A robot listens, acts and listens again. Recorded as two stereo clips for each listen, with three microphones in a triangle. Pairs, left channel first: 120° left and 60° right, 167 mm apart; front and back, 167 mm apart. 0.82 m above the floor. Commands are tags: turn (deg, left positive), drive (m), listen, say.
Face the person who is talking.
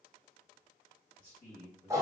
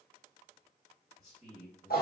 <turn deg="95"/>
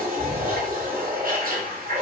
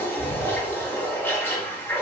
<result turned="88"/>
<listen/>
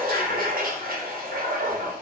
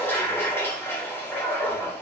<listen/>
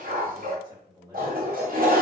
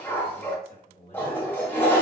<say>Facing the man speaking.</say>